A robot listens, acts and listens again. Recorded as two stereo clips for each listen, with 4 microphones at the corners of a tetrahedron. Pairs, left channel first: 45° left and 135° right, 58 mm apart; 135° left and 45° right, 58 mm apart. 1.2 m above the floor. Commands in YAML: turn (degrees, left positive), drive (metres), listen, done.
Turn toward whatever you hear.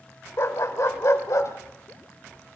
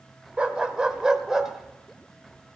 turn: 35
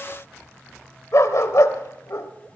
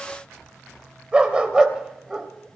turn: 35
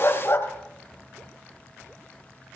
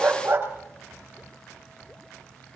done: "Facing the dog barking, 2 to 4 m away."